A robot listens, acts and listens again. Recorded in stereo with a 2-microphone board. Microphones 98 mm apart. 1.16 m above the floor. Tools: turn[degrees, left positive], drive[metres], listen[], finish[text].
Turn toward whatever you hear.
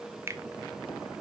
Thought: The finger snap: about 30° right or 150° right.
Action: turn[-30]
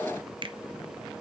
Thought: So it is at 120° right.
Action: turn[-120]
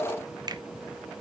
Action: listen[]
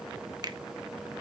Thought: The finger snap is now 45° right.
Action: turn[-45]
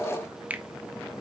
Thought: The finger snap is now 15° right.
Action: turn[-15]
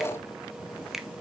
Action: finish[Found it: a finger snap, straight ahead.]